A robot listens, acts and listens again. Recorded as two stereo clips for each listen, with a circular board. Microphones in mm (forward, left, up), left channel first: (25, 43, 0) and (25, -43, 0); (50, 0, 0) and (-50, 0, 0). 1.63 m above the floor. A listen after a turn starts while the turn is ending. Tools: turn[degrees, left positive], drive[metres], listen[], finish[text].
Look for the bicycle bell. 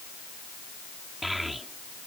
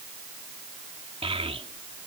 Action: listen[]
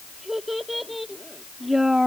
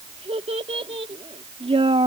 Action: listen[]
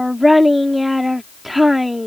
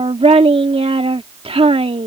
Action: finish[I can't make out a bicycle bell to turn to.]